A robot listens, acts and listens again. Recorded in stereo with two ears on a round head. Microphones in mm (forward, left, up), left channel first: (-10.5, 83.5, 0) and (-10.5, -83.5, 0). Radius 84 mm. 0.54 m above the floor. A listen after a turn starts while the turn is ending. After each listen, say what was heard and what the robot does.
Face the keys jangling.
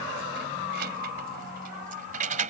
The keys jangling: about 40° right or 140° right. Turn 40° right.
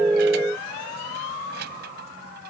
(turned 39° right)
So it is at 120° right. Turn 120° right.
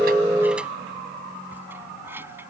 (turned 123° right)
The keys jangling is now 10° right. Turn 10° right.
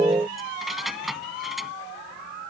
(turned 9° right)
Found it: keys jangling, straight ahead.